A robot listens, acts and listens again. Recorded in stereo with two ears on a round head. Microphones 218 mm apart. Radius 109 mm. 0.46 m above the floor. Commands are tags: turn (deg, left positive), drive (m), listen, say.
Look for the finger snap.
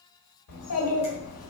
<listen/>
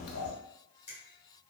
<turn deg="25"/>
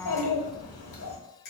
<turn deg="125"/>
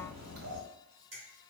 <turn deg="-30"/>
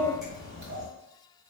<listen/>
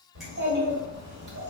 <listen/>
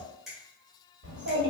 <say>Facing the finger snap.</say>